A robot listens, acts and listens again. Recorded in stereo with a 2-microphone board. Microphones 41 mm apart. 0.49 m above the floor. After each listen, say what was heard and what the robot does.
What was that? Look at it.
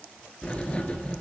The writing: about 30° left or 150° left. Turn 30° left.
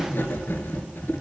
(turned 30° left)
So it is at 120° left. Turn 120° left.
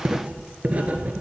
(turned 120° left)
The writing is now 35° right. Turn 35° right.
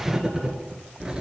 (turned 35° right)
The writing is now 15° right. Turn 15° right.
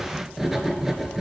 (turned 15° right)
Facing the writing.